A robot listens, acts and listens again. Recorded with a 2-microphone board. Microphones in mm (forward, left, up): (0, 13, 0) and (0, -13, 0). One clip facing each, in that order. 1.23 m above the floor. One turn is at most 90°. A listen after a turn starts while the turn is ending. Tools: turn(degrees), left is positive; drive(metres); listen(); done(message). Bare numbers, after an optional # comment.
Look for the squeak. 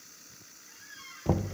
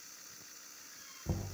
# The squeak: about 65° left or 115° left.
turn(65)
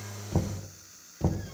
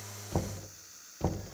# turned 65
listen()
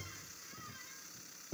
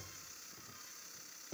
listen()
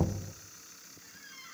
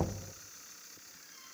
# So it is at 50° left.
turn(50)
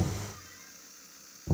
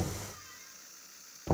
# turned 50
listen()
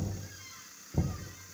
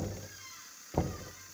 done("Found it: a squeak, straight ahead, over 4 m away.")